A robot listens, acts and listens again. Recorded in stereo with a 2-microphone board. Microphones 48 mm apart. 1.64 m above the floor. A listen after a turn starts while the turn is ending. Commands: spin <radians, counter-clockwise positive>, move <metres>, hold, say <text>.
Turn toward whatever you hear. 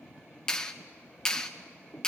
spin 0.35
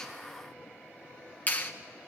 spin 2.44
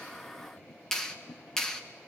spin 0.17
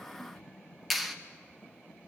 say Found it: a clap, straight ahead.